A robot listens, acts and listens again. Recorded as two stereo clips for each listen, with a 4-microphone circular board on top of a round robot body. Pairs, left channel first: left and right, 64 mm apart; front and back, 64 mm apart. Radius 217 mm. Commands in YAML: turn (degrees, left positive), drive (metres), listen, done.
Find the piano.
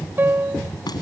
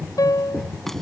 turn: -30
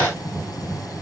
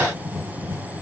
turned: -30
listen: true
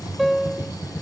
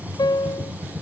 done: "Facing the piano."